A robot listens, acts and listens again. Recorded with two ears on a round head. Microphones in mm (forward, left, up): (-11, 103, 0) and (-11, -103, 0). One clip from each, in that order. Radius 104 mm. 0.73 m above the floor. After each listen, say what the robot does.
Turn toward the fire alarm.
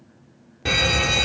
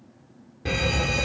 Turn 30° left.
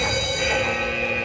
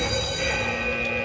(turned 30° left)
Found it: a fire alarm, straight ahead.